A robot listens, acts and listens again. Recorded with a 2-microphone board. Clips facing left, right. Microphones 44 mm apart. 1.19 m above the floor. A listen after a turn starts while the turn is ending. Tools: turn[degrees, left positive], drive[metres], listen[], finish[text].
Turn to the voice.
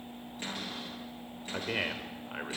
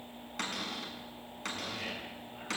Action: turn[90]
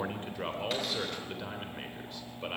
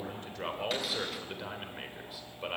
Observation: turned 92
Action: finish[Found it: a man speaking, straight ahead, 2 to 4 m away.]